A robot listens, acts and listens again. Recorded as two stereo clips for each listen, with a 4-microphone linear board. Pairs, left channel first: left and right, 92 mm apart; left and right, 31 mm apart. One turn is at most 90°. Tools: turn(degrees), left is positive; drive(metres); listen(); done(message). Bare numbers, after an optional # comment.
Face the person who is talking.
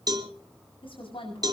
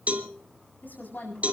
turn(90)
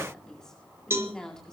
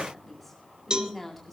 done("Facing the woman speaking.")